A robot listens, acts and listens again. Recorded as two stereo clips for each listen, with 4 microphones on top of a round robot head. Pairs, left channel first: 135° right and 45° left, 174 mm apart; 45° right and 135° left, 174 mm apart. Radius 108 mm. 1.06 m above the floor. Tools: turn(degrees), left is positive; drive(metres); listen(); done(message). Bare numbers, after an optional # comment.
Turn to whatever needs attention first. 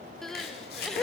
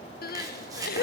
# The crying: 45° right.
turn(-45)
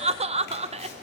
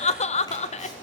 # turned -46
done("Found it: crying, straight ahead, under 1 m away.")